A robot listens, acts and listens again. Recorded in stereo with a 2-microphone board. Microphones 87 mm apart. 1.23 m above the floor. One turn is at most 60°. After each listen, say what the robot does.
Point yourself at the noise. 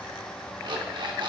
Turn 60° right.
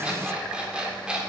Turn 10° right.
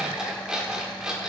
Turn 10° right.
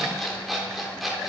Facing the alarm clock.